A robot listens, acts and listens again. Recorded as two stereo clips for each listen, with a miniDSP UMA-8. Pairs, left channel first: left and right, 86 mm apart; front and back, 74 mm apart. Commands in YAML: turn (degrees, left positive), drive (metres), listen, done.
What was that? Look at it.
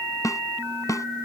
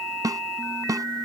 turn: 140
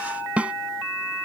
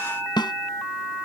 turn: -15
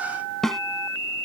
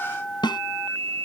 done: "Found it: a snare drum, straight ahead."